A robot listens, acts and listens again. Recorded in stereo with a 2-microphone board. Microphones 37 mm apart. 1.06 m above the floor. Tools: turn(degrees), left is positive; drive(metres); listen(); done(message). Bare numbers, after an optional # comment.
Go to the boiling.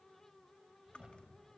listen()
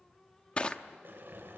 # The boiling: about 70° right or 110° right.
turn(-70)
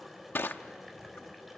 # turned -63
drive(1.0)
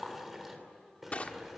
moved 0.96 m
drive(1.0)
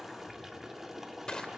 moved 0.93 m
# The boiling is now 10° right.
turn(-10)
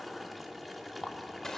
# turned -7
drive(1.0)
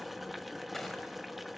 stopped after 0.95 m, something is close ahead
done("Arrived at the boiling, straight ahead.")